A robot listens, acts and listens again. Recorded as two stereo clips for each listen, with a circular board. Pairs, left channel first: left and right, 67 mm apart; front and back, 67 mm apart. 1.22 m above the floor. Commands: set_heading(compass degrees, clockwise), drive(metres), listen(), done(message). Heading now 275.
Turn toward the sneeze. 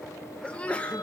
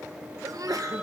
set_heading(115)
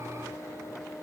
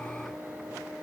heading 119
done("I heard a sneeze from this way, but can't make it out now.")